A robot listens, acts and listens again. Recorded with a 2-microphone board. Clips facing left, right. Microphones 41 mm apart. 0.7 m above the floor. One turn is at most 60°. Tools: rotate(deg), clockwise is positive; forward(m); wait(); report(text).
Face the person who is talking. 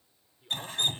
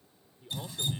rotate(-30)
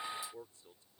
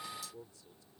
rotate(-60)
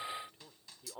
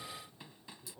rotate(-60)
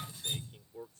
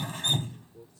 rotate(-55)
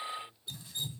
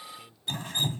report("Found it: a man speaking, straight ahead.")